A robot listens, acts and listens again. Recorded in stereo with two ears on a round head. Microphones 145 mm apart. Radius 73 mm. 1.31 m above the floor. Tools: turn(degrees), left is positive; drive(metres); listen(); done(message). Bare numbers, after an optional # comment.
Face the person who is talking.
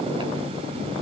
listen()
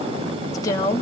# The woman speaking: about 25° left or 155° left.
turn(25)
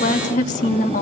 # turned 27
# So it is at 130° left.
turn(130)
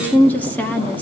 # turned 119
# The woman speaking is now 10° left.
turn(10)
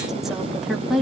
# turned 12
done("Found it: a woman speaking, straight ahead.")